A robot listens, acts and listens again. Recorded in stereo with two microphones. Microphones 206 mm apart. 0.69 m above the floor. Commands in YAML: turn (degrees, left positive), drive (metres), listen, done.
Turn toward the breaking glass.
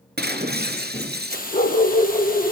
turn: -55
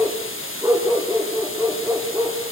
listen: true
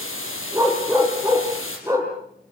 done: "I heard breaking glass, but can't make it out now. It was about straight ahead or 70° right."